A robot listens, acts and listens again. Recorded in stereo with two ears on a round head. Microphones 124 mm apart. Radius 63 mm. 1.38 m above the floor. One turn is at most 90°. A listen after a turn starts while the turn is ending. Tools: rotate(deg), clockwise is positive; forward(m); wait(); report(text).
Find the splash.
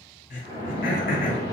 rotate(-45)
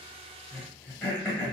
wait()
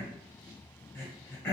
report("I heard a splash, but can't make it out now. It was about straight ahead or 90° left.")